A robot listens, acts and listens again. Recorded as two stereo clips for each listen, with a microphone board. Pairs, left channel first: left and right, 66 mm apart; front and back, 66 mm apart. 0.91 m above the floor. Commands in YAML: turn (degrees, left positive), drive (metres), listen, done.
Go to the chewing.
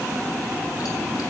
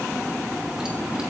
listen: true
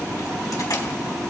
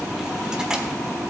listen: true
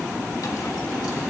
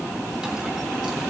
done: "I can't make out chewing to turn to."